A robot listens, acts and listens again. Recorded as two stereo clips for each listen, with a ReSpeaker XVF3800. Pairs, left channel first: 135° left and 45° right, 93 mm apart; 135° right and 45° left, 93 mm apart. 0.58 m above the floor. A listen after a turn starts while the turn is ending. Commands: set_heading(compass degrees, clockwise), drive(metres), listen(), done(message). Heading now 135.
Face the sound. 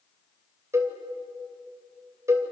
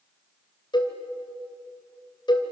set_heading(235)
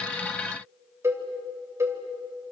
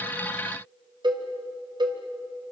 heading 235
set_heading(220)
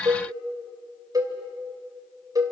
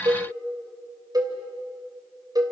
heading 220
done("Facing the cowbell, 2 to 4 m away.")